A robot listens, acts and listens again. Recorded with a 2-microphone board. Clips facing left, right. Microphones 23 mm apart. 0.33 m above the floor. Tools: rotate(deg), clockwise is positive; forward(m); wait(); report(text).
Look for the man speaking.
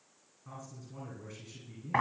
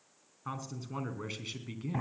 rotate(60)
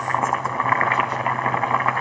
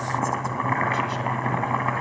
wait()
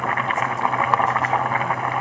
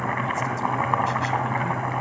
wait()
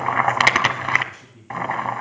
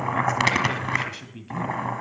rotate(50)
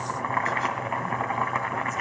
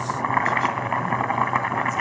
wait()
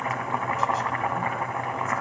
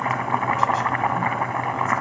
wait()
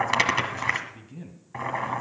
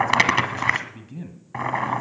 rotate(10)
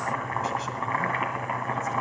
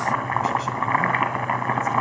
wait()
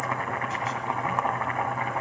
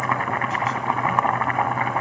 wait()
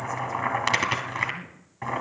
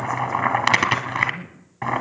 report("Facing the man speaking.")